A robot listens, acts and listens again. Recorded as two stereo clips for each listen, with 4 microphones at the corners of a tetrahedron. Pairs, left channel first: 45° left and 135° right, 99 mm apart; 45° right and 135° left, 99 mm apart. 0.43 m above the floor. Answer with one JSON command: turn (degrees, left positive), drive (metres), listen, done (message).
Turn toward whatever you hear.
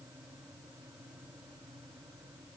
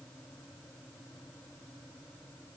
{"listen": true}
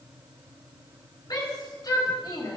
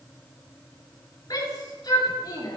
{"done": "Facing the shout."}